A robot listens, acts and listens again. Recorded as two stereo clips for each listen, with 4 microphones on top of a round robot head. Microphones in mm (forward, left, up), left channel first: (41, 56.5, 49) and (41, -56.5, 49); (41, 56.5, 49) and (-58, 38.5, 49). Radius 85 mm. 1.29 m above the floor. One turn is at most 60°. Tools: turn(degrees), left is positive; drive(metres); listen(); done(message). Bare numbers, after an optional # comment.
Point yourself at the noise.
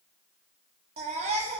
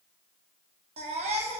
# The baby crying: 135° right.
turn(-60)
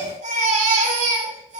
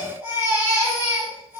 # The baby crying is now 90° right.
turn(-60)
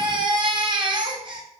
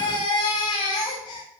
# The baby crying is now 45° right.
turn(-45)
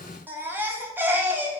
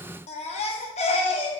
# The baby crying is now 20° right.
turn(-20)
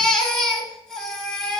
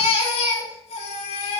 done("Facing the baby crying.")